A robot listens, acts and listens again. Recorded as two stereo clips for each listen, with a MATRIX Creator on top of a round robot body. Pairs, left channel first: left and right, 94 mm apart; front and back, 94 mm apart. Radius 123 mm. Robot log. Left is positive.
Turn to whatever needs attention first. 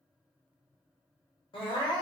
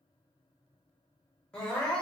note: The crying: 80° left.
cmd yaw +80
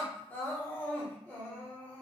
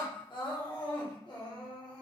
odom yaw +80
note: The crying is now 20° left.
cmd yaw +20
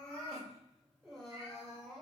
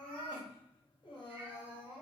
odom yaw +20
end: Facing the crying, 1 to 2 m away.